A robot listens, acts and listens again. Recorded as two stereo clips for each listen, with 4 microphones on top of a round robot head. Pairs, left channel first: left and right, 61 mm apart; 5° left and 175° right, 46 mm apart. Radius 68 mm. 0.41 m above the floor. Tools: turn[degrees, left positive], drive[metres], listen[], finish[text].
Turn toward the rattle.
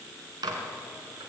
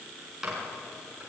Action: listen[]
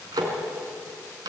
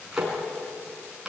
Action: listen[]
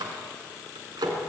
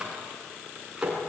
Action: finish[I can't make out a rattle to turn to.]